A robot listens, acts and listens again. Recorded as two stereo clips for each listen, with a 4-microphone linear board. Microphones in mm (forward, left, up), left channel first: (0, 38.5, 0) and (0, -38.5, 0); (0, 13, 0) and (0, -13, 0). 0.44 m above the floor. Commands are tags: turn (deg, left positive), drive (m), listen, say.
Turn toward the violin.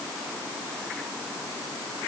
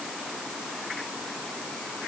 <listen/>
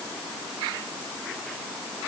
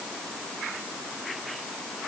<listen/>
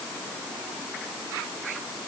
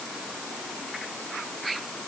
<say>I can't make out a violin.</say>